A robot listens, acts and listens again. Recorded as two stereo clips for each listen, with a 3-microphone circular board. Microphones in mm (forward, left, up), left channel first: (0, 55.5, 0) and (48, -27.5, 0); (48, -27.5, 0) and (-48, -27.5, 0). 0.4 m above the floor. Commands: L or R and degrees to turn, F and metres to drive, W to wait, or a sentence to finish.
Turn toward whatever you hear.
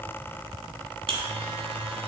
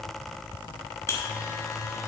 R60
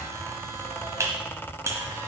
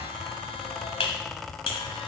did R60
Facing the buzzer, 1 to 2 m away.